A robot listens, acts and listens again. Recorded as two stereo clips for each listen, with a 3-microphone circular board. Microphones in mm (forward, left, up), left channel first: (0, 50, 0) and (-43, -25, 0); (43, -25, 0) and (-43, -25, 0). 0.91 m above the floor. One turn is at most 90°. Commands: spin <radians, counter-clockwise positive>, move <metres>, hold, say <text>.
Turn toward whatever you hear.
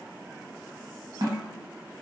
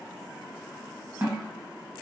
spin -1.57
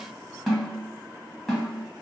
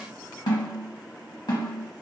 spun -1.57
spin -0.52
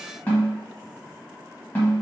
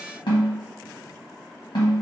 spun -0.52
spin -0.17
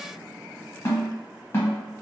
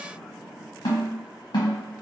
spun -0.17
say Facing the snare drum, 1 to 2 m away.